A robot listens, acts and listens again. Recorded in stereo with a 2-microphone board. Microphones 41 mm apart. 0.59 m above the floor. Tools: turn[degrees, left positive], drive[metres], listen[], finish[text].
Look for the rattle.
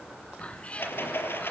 Thought: The rattle: about 65° left or 115° left.
Action: turn[65]
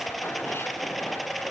Action: finish[Found it: a rattle, straight ahead.]